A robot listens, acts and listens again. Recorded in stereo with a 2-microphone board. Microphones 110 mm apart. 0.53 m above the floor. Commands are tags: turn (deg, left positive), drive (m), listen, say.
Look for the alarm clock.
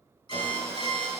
<turn deg="50"/>
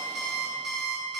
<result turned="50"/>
<say>Facing the alarm clock, 1 to 2 m away.</say>